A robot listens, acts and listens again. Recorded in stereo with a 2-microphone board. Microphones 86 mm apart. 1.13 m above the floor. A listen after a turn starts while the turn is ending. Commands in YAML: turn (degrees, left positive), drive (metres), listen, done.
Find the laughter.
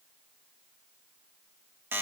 listen: true
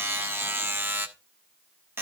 listen: true
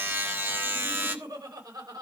turn: -50
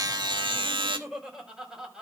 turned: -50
turn: -10
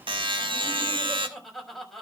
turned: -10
done: "Facing the laughter."